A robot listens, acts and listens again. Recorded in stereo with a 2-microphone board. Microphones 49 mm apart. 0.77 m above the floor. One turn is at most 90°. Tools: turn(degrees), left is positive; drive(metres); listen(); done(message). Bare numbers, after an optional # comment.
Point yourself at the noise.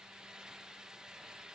listen()
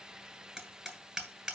# The hammering: about 15° right or 165° right.
turn(-15)
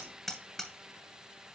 done("Facing the hammering.")